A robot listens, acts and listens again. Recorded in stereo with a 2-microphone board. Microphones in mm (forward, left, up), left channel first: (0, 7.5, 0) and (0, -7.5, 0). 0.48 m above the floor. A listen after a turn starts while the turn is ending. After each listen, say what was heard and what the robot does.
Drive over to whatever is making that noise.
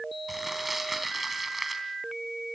Turn 30° right.
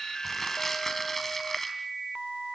So it is at 20° left. Turn 20° left.
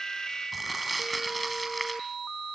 Drive 1.0 m forward.
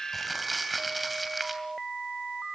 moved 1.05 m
Drive 1.0 m forward.
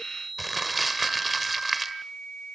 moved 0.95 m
Drive 1.0 m forward.
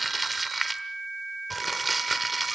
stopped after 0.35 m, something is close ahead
Arrived at the crumpling, straight ahead.